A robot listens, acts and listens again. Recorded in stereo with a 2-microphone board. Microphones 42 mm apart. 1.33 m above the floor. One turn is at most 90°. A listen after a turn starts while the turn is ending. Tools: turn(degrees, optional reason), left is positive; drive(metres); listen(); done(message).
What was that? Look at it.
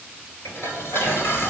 turn(degrees=90)
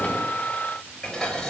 turn(degrees=10, reason="So it is at 10° left.")
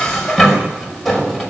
done("Facing the dishes clattering, over 4 m away.")